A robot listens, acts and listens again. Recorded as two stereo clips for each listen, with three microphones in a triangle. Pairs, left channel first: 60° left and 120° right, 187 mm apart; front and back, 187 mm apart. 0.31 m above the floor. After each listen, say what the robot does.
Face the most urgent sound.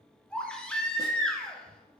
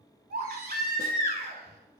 Turn 145° left.
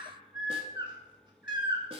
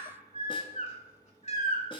Turn 50° left.
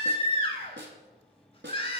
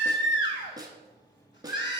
Found it: a baby crying, straight ahead, 1 to 2 m away.